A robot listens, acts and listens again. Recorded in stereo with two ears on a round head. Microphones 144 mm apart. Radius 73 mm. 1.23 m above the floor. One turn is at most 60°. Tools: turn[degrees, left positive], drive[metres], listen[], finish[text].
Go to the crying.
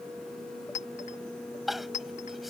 Action: turn[30]
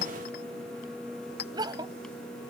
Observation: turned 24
Thought: So it is at 25° right.
Action: turn[-25]
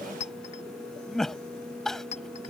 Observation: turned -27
Action: drive[1.0]
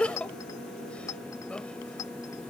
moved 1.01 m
Action: drive[1.0]
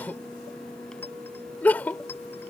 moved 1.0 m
Thought: The crying is now 10° left.
Action: turn[10]
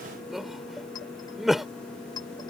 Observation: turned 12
Action: drive[1.0]
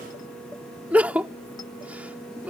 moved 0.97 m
Thought: The crying is now 10° right.
Action: turn[-10]
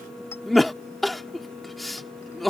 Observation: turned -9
Action: drive[1.0]
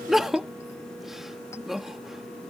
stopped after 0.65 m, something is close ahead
Action: finish[Arrived at the crying, straight ahead.]